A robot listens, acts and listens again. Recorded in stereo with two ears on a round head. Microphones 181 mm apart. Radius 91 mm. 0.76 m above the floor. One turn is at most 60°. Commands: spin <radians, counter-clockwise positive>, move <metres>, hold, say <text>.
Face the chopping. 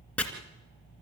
spin 0.52
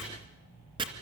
spin -0.44
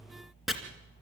say Found it: chopping, straight ahead.